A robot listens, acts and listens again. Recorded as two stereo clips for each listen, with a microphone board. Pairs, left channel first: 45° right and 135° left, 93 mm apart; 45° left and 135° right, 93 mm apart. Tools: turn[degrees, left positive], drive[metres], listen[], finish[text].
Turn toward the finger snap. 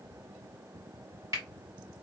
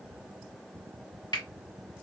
Thought: The finger snap: 85° left.
Action: turn[85]
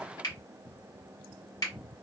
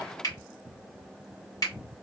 Action: finish[Facing the finger snap.]